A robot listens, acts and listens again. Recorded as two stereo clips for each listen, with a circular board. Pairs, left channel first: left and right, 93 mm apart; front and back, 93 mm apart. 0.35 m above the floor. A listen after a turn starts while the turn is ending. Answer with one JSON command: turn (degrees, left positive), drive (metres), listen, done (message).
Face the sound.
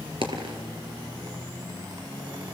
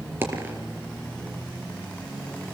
{"turn": -115}
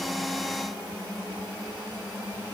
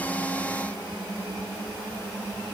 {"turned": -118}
{"done": "I heard a dropped coin from this way, but can't make it out now."}